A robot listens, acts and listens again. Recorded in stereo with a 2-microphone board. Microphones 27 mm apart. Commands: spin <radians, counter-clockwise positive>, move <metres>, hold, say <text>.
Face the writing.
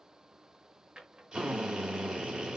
hold
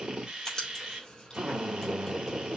spin 0.44
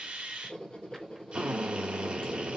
spin 2.18
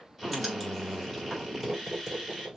say Found it: writing, straight ahead.